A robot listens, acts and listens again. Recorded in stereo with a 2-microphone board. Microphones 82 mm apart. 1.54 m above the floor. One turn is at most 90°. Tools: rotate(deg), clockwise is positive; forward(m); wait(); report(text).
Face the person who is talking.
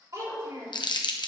rotate(50)
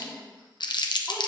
wait()
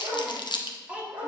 rotate(20)
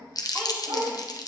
wait()
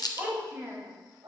rotate(30)
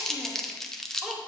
report("Facing the child speaking, 1 to 2 m away.")